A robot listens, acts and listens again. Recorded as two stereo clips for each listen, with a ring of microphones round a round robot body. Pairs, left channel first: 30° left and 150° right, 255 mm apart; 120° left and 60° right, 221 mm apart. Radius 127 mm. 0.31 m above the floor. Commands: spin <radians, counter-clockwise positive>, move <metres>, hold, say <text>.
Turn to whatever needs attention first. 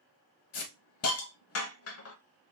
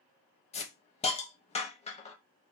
hold
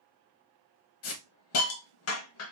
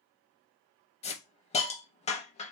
hold
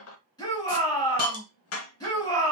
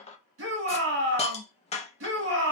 spin -0.79
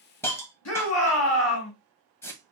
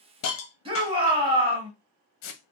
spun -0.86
say Found it: a shout, straight ahead.